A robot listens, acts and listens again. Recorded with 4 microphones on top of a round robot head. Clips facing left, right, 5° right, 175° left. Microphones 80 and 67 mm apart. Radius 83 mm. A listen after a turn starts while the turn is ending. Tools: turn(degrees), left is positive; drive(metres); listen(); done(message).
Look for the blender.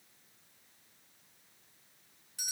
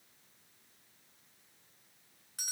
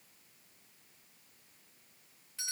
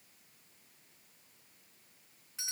listen()
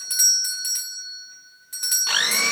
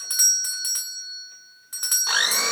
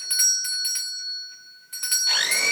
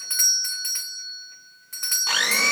turn(degrees=-160)
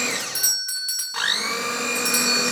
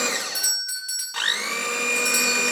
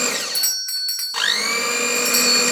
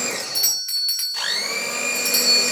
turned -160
turn(degrees=10)
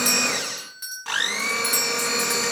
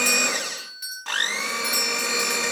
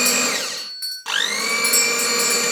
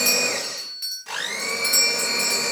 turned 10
done("Facing the blender, 2 to 4 m away.")